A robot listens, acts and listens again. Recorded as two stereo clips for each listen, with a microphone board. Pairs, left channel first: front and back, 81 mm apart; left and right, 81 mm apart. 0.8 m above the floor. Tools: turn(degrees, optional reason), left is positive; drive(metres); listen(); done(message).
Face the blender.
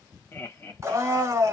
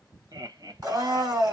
turn(degrees=-125, reason="The blender: 125° right.")
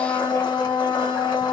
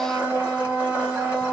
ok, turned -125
turn(degrees=-15, reason="The blender is now 15° right.")
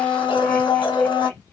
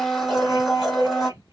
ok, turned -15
done("Found it: a blender, straight ahead.")